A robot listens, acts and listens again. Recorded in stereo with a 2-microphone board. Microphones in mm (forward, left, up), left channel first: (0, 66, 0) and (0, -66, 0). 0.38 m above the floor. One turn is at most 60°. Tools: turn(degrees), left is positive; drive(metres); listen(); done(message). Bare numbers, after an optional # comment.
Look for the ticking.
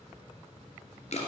listen()
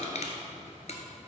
listen()
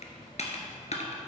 done("I can't make out ticking, only crushing.")